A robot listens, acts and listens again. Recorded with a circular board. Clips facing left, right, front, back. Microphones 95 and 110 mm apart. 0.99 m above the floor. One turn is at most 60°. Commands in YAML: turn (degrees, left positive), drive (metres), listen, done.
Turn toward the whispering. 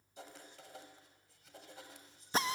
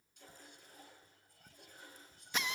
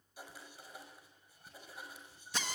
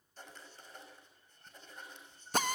turn: -60
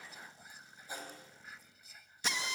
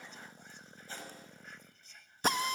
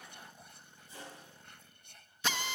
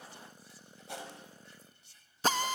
done: "Facing the whispering."